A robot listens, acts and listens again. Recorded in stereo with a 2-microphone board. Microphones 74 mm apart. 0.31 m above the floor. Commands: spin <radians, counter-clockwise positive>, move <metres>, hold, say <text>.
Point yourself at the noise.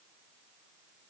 hold
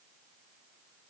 hold
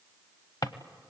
spin 1.05
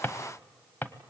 spin 0.52
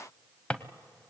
spin 0.35
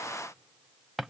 say Found it: a drawer, straight ahead, under 1 m away.